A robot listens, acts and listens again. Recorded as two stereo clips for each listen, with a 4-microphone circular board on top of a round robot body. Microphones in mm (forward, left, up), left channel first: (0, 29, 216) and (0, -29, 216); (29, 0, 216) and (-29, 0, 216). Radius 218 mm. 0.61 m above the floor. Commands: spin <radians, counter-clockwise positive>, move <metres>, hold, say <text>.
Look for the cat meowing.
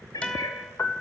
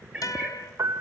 spin 1.83
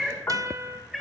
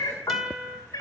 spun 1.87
say Facing the cat meowing.